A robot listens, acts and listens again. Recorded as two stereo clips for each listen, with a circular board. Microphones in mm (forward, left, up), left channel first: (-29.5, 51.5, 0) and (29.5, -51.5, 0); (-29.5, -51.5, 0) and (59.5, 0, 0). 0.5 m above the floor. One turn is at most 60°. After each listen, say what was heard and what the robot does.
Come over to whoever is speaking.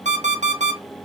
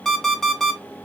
Keep listening.
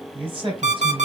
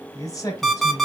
The man speaking: 100° right. Turn 60° right.
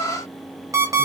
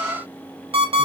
Nothing new. It was at 40° right. Turn 40° right.
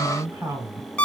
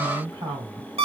Drive 1.0 m forward.
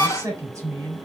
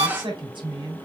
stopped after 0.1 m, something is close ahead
Something is in my way. I am facing the man speaking but have not reached it.